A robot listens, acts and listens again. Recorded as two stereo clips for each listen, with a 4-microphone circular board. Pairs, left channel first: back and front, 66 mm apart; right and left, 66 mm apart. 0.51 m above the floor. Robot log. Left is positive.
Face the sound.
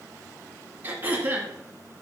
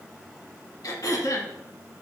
note: The throat clearing: 60° right.
cmd yaw -60
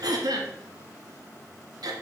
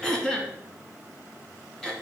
note: The throat clearing is now 10° right.
cmd yaw -10
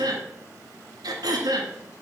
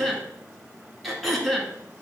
end: Facing the throat clearing.